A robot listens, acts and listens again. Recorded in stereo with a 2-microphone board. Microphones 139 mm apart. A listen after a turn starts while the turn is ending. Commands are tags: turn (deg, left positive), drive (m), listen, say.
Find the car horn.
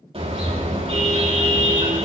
<turn deg="-45"/>
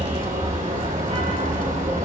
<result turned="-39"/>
<turn deg="-95"/>
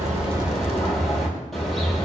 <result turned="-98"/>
<say>Found it: a car horn, straight ahead, over 4 m away.</say>